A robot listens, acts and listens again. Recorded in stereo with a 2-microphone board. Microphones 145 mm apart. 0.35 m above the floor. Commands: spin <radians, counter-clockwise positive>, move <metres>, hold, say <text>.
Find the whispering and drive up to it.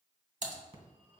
hold
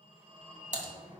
hold
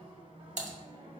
say I can't make out whispering, only a phone ringing and typing on a keyboard.